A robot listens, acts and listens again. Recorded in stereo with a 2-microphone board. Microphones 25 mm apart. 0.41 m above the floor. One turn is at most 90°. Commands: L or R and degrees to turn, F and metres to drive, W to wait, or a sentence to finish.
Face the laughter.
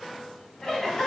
L30
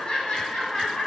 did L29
L20
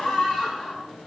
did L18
L90
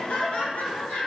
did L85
L70
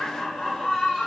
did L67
L20
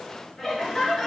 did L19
Facing the laughter, over 4 m away.